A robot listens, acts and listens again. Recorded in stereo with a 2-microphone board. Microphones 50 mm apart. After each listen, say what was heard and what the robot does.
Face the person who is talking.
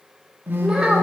Turn 30° right.
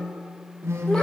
Keep listening.
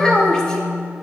So it is at 15° left. Turn 15° left.
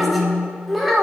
Facing the child speaking.